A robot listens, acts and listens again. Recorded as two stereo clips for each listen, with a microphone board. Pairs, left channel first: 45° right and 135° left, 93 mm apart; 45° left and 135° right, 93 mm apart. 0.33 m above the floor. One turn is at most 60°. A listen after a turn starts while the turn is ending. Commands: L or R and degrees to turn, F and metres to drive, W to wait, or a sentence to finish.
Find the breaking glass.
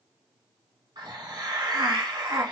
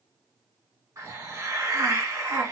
W
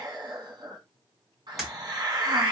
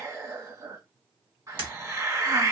R60
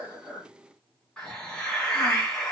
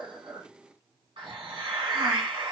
R60
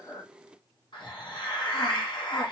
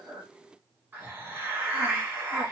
R20
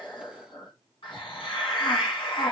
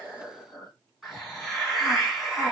I heard breaking glass from this way, but can't make it out now.